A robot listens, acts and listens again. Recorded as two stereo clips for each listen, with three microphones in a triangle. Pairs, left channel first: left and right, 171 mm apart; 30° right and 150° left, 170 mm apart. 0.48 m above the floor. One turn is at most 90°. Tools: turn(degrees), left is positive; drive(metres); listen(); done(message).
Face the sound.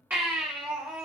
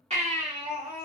turn(degrees=-90)
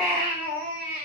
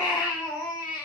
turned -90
turn(degrees=-85)
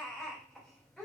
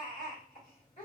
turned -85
done("Found it: a baby crying, straight ahead.")